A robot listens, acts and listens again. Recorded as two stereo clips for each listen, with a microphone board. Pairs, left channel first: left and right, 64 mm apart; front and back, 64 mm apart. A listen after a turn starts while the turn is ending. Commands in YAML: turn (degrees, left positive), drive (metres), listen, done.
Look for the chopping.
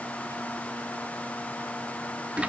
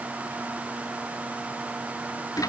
listen: true
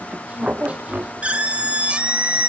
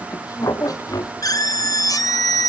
listen: true
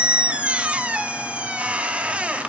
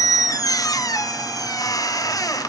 done: "I can't make out chopping, only a squeak."